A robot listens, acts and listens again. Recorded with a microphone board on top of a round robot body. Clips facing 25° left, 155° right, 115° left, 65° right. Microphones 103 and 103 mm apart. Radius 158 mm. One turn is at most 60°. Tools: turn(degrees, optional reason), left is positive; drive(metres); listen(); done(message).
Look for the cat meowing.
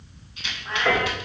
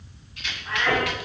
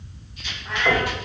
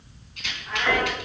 turn(degrees=60, reason="The cat meowing: 90° left.")
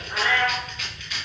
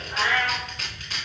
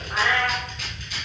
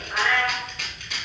turn(degrees=30, reason="The cat meowing is now 30° left.")
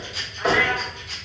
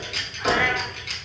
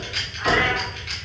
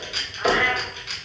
done("Facing the cat meowing.")